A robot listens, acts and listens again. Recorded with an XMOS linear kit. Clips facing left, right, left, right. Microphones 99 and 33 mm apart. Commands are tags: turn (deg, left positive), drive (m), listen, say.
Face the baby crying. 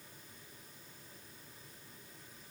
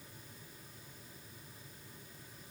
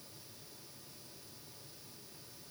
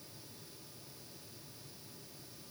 <listen/>
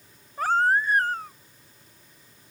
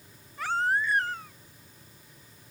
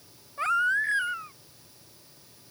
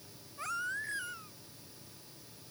<turn deg="45"/>
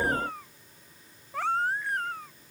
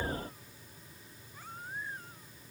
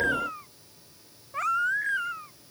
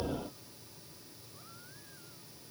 <turn deg="95"/>
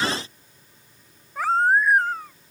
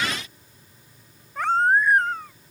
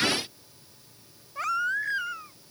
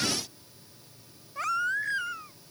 <say>Found it: a baby crying, straight ahead.</say>